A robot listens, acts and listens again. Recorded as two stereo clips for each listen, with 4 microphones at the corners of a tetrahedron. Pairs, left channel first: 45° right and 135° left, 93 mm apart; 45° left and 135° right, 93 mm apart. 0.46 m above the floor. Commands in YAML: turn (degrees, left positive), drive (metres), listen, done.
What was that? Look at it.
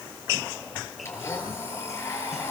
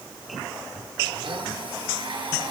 turn: -105
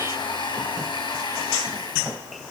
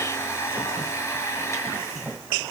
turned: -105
turn: -15
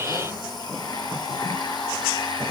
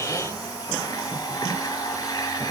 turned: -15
done: "Found it: a blender, straight ahead."